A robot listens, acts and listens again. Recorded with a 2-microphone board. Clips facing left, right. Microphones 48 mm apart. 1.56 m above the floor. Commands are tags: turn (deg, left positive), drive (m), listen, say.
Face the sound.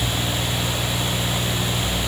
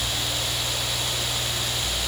<listen/>
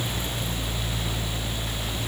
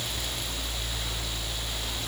<listen/>
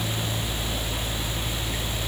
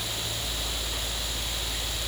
<say>I can't make out anything.</say>